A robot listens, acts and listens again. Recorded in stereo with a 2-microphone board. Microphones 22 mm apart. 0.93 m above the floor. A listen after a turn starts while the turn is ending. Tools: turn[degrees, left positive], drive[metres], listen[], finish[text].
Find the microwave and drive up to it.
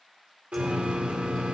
Action: turn[30]
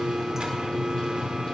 Thought: So it is at 140° left.
Action: turn[140]
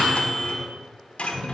Action: drive[1.0]
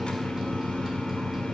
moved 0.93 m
Thought: The microwave is now 15° right.
Action: turn[-15]
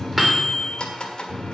Action: drive[1.0]
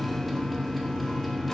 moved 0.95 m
Action: drive[1.0]
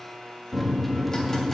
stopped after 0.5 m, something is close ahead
Action: finish[Arrived at the microwave, straight ahead.]